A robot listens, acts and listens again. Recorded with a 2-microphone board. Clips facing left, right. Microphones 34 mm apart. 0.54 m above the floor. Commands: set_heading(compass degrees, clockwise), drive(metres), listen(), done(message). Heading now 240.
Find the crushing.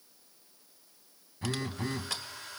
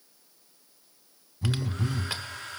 listen()
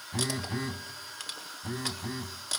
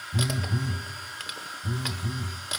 listen()
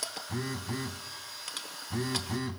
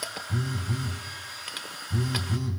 set_heading(260)
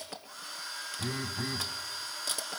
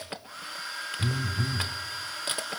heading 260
set_heading(40)
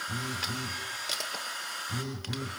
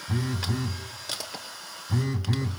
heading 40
done("Found it: crushing, straight ahead, 1 to 2 m away.")